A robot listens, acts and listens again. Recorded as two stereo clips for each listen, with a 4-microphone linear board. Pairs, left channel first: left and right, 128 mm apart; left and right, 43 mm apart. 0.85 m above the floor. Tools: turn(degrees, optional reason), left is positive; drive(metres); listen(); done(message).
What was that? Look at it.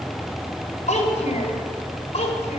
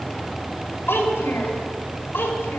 turn(degrees=60, reason="The child speaking: about 60° left or 120° left.")
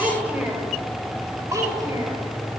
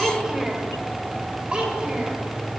turn(degrees=-25, reason="So it is at 25° right.")
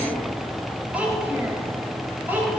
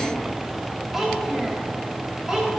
turn(degrees=-15, reason="The child speaking is now 15° right.")
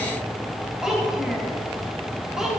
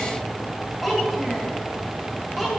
done("Found it: a child speaking, straight ahead.")